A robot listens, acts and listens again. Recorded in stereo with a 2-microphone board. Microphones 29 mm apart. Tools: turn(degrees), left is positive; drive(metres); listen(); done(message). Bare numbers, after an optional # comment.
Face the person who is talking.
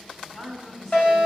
# The woman speaking: about 35° left or 145° left.
turn(35)
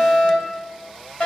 listen()
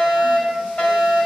listen()
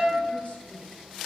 done("I heard a woman speaking, but can't make it out now. It was about straight ahead or 110° left.")